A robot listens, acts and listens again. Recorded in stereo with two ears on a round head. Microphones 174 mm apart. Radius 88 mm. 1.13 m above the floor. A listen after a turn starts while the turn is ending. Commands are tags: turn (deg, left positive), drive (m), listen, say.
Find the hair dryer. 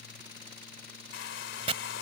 <turn deg="60"/>
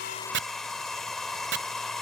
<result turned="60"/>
<say>Facing the hair dryer.</say>